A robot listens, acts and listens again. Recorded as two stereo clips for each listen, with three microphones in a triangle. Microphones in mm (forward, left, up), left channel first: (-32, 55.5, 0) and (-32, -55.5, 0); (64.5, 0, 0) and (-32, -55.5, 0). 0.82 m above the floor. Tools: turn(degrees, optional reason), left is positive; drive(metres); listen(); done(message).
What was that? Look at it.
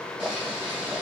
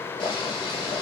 turn(degrees=-10, reason="The boiling: 10° right.")
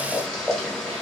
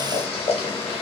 done("Found it: boiling, straight ahead.")